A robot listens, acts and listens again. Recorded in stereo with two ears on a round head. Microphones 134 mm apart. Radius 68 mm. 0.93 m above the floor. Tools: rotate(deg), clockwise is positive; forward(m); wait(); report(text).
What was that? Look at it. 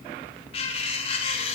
rotate(-35)
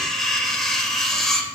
report("Facing the cutlery clinking.")